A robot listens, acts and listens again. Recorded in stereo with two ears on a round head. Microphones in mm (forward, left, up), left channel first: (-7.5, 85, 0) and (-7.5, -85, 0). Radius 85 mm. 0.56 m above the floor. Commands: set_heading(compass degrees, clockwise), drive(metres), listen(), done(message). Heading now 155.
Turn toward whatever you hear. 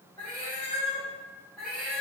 set_heading(185)
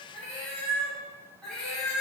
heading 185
set_heading(155)
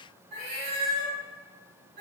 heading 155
set_heading(205)
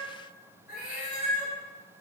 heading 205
done("Found it: a cat meowing, straight ahead, 2 to 4 m away.")